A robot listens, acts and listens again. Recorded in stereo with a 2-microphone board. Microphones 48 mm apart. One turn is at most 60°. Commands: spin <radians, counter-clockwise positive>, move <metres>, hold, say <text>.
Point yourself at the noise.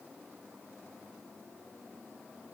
hold
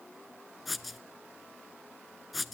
spin 0.52
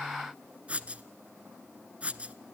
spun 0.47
spin -0.52
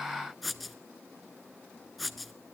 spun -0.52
say Facing the writing.